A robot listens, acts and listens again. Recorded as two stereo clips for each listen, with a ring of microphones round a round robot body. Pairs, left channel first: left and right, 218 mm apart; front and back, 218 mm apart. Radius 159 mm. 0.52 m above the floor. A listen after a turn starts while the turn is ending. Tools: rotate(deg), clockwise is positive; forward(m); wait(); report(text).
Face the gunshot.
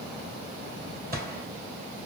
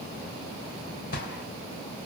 rotate(50)
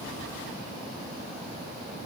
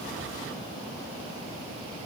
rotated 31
rotate(20)
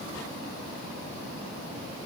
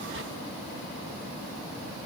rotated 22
report("I heard a gunshot from this way, but can't make it out now.")